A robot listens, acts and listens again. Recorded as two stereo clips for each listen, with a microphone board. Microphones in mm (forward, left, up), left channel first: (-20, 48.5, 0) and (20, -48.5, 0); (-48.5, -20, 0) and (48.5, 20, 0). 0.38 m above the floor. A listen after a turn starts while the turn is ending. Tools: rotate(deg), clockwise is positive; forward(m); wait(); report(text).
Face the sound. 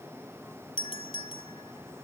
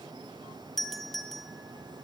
rotate(-115)
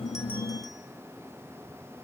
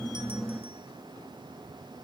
wait()
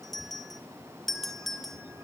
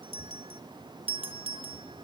rotate(-25)
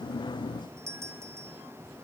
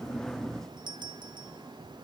rotate(10)
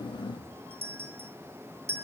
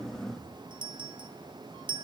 report("Found it: a doorbell, straight ahead, 2 to 4 m away.")